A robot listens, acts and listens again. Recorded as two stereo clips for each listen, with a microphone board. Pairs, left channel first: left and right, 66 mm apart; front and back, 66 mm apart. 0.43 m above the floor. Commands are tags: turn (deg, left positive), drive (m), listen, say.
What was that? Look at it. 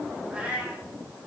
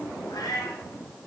<turn deg="-20"/>
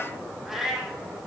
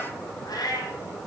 <turn deg="-10"/>
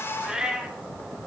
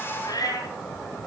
<turn deg="-15"/>
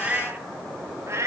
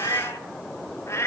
<turn deg="-50"/>
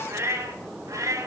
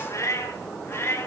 <turn deg="-50"/>
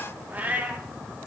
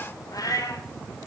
<turn deg="-25"/>
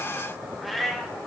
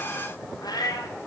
<say>Found it: a cat meowing, straight ahead.</say>